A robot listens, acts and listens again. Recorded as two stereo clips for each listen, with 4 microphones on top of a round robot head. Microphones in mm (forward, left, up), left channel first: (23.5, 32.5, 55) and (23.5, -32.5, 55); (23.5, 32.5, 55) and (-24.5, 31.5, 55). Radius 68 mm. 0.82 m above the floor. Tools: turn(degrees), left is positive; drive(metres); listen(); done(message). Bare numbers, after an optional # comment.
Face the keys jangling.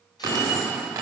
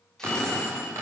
# The keys jangling: 145° right.
turn(-145)
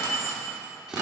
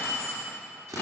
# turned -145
# The keys jangling is now 50° right.
turn(-50)
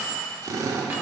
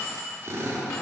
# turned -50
# The keys jangling is now 25° right.
turn(-25)
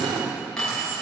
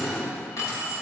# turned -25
# The keys jangling is now 10° left.
turn(10)
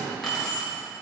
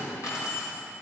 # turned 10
done("Found it: keys jangling, straight ahead.")